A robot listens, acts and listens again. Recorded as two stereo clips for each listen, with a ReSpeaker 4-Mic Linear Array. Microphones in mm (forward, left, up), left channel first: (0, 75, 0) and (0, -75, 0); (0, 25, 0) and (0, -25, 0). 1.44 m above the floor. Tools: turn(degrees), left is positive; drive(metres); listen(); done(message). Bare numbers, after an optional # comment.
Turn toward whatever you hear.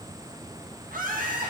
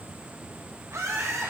turn(-90)
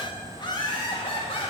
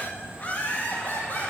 # So it is at 40° left.
turn(40)
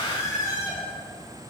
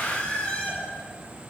# The laughter is now 25° left.
turn(25)
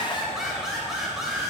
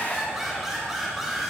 done("Found it: laughter, straight ahead, 2 to 4 m away.")